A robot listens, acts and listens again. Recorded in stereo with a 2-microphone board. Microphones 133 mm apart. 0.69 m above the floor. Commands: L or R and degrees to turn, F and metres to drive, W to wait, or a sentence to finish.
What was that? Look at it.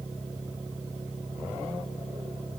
W
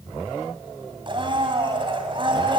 R40
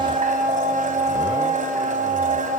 R100
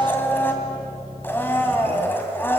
L15
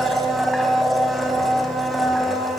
Facing the blender.